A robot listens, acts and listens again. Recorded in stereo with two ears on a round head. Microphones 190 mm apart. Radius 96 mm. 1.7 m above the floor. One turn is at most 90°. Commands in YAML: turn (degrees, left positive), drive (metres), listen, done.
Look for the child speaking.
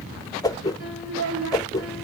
turn: -60
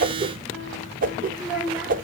done: "Found it: a child speaking, straight ahead, 1 to 2 m away."